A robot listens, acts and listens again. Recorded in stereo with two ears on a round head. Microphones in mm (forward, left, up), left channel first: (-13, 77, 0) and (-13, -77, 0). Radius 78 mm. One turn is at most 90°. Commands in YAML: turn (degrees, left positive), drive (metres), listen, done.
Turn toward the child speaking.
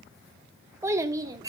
turn: -20
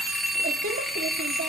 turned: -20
listen: true
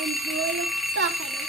turn: -90
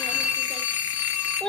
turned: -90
done: "Found it: a child speaking, straight ahead, 2 to 4 m away."